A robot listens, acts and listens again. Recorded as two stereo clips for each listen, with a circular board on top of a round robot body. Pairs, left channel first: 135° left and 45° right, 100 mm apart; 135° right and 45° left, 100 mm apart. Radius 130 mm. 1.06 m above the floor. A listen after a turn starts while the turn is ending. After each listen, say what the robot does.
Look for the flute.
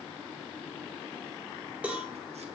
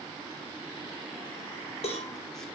Keep listening.
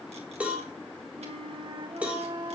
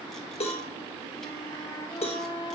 Turn 80° right.
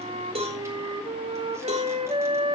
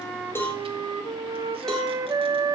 Turn 10° right.
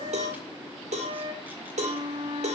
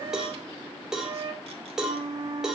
Found it: a flute, straight ahead.